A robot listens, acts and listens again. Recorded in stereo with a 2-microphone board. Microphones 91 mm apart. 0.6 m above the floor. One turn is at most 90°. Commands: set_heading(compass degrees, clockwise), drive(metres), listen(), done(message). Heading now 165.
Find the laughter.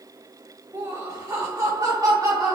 set_heading(205)
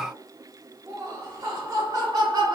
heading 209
set_heading(254)
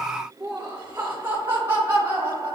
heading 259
set_heading(284)
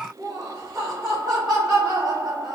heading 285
done("Found it: laughter, straight ahead.")